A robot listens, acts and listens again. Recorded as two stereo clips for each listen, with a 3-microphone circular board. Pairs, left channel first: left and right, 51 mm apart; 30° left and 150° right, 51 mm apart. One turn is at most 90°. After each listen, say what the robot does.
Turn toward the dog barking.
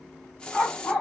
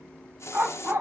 Turn 90° left.
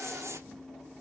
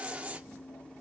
Turn 70° left.
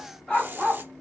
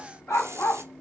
Facing the dog barking, 2 to 4 m away.